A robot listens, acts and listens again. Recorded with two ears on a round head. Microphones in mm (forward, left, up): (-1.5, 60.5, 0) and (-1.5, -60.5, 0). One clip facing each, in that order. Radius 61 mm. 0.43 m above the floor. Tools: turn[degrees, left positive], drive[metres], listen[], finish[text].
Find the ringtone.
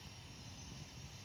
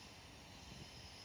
Action: listen[]
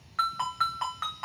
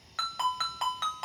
Thought: The ringtone: about 35° right or 145° right.
Action: turn[-35]
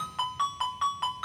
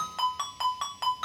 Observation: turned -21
Thought: So it is at 120° right.
Action: turn[-120]
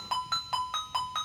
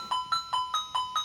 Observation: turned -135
Thought: The ringtone is now 15° left.
Action: turn[15]
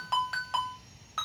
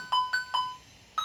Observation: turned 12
Action: finish[Found it: a ringtone, straight ahead, 1 to 2 m away.]